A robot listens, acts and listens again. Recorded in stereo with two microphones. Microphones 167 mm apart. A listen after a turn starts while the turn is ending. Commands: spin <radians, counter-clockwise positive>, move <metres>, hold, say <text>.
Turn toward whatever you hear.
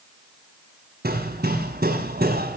spin -1.22
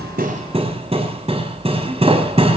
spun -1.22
spin -0.61
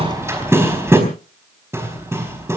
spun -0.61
spin -0.26
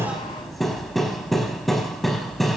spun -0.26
say Facing the hammering.